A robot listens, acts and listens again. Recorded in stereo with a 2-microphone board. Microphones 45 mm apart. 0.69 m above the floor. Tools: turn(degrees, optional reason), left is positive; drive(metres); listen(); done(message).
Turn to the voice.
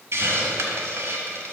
listen()
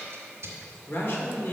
turn(degrees=50, reason="The man speaking: about 50° left or 130° left.")
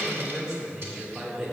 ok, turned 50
turn(degrees=-25, reason="So it is at 25° right.")
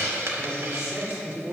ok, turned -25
turn(degrees=-20, reason="The man speaking is now 20° right.")
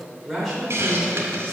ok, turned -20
done("Found it: a man speaking, straight ahead.")